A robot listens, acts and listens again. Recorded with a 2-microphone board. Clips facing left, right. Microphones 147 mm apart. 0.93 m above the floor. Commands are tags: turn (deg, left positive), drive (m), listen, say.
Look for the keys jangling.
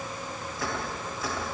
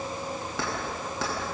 <turn deg="-90"/>
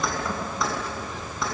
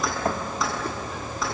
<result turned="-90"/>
<say>Facing the keys jangling.</say>